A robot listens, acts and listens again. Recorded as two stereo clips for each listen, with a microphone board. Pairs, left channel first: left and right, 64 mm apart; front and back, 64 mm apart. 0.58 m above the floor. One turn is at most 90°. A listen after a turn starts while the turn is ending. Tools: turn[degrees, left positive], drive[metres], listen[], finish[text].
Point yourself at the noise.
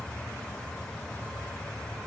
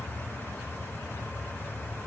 Action: listen[]
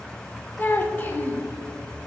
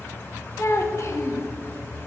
Thought: The child speaking: 35° left.
Action: turn[35]
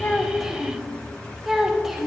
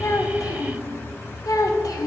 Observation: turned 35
Action: finish[Facing the child speaking, under 1 m away.]